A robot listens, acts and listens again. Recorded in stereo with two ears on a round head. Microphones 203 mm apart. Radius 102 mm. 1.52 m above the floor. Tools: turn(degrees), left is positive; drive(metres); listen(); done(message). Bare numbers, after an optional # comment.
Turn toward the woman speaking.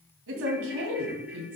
# The woman speaking: about 60° right or 120° right.
turn(-60)
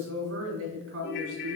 # So it is at 60° right.
turn(-60)
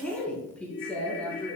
done("Facing the woman speaking, over 4 m away.")